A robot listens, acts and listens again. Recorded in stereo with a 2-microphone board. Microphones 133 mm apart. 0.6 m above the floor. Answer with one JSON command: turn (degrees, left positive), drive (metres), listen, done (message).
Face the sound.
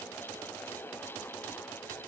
{"listen": true}
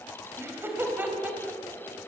{"turn": -30}
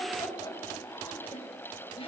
{"turn": 40}
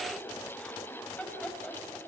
{"done": "Found it: laughter, straight ahead."}